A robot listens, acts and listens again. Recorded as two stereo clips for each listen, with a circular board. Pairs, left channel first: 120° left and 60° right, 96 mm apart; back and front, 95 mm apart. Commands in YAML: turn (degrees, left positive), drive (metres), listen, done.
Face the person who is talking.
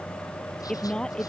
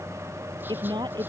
turn: 40
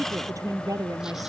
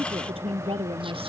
done: "Facing the woman speaking."